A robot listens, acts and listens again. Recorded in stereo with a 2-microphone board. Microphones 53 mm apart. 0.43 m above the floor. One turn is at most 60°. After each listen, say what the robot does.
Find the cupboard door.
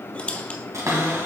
Turn 60° right.
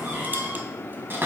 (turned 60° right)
Turn 45° right.
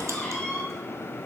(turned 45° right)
Turn 20° left.
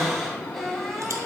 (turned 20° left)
Found it: a cupboard door, straight ahead, 2 to 4 m away.